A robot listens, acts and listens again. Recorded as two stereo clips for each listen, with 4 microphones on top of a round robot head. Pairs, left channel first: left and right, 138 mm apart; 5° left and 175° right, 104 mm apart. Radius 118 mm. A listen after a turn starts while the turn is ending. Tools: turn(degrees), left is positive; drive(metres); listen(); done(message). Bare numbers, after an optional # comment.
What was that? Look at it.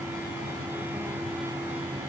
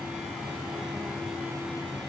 listen()
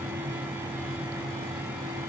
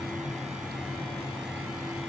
listen()
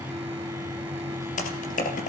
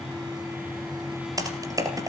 # The typing on a keyboard: 130° left.
turn(130)
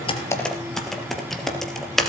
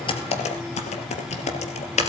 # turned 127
done("Found it: typing on a keyboard, straight ahead.")